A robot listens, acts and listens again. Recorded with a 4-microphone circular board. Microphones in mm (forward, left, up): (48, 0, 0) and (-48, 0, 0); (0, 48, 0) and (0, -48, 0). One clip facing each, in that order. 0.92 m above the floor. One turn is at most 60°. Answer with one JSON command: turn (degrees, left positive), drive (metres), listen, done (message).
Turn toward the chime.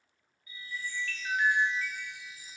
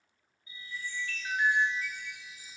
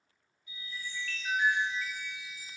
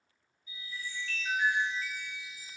{"turn": 60}
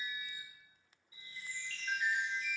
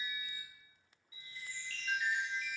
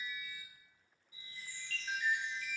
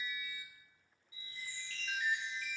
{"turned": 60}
{"turn": 50}
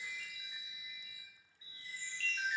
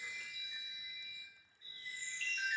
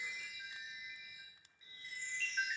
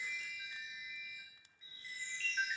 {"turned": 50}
{"done": "Facing the chime."}